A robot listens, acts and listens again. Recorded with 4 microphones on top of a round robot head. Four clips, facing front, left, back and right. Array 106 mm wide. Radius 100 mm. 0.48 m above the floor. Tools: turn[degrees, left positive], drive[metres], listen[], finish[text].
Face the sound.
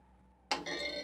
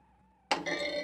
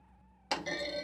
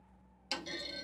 Thought: The clunk: 90° left.
Action: turn[90]
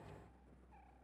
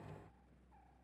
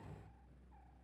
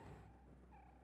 Action: finish[I heard a clunk from this way, but can't make it out now.]